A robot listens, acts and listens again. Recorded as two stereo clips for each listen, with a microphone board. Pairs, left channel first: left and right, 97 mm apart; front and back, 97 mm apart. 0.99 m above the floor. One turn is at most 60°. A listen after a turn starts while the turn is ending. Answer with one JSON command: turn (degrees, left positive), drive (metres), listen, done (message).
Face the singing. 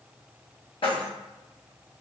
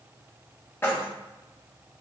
{"listen": true}
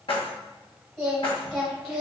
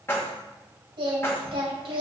{"turn": 60}
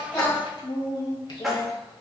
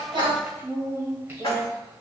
{"turn": 60}
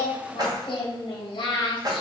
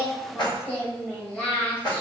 {"turn": 60}
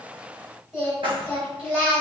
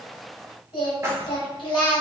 {"turn": -10}
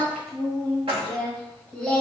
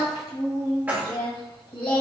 {"done": "Facing the singing."}